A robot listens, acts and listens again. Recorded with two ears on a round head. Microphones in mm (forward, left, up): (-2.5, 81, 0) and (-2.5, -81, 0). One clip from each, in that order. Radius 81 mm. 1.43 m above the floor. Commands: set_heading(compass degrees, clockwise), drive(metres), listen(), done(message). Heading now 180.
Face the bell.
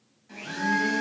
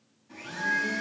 set_heading(150)
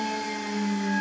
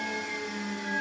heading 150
set_heading(175)
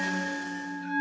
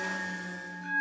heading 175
done("Facing the bell, over 4 m away.")